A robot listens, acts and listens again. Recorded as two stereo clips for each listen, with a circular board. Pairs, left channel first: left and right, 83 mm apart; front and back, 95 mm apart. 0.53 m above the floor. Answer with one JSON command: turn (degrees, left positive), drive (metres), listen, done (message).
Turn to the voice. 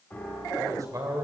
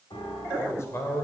{"turn": -55}
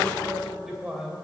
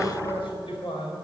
{"turn": -10}
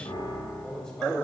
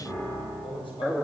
{"done": "Found it: a man speaking, straight ahead, 2 to 4 m away."}